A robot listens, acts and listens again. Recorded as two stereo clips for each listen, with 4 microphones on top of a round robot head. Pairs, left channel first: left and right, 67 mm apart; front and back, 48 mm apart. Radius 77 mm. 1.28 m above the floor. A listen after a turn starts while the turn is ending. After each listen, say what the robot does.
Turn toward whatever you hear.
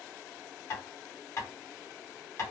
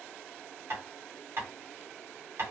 Turn 135° left.
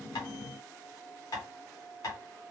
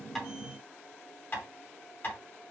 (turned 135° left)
Turn 45° left.
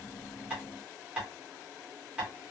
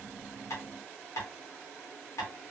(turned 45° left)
Turn 15° right.
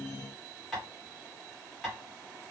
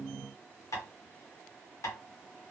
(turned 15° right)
Facing the tapping.